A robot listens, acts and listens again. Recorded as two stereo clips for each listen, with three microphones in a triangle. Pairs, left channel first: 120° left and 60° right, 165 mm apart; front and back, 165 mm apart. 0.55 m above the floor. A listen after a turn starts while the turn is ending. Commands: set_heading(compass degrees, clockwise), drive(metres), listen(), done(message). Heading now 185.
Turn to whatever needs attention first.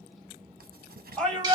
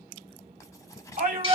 set_heading(340)
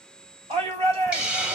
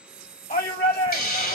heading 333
set_heading(343)
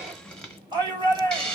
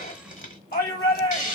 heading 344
done("Facing the shout, 1 to 2 m away.")